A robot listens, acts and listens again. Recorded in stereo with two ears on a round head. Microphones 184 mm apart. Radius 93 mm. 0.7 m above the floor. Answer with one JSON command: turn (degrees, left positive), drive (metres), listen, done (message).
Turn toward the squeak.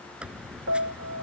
{"turn": -30}
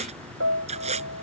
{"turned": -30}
{"turn": -145}
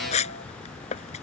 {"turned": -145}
{"turn": 35}
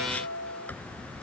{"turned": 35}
{"turn": 10}
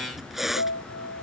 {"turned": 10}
{"done": "Found it: a squeak, straight ahead."}